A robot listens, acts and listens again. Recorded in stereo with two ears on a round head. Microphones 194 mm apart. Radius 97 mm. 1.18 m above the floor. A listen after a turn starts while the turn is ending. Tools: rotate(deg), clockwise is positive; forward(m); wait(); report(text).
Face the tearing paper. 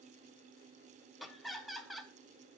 wait()
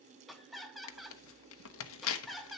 rotate(-70)
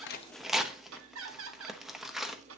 report("Facing the tearing paper, under 1 m away.")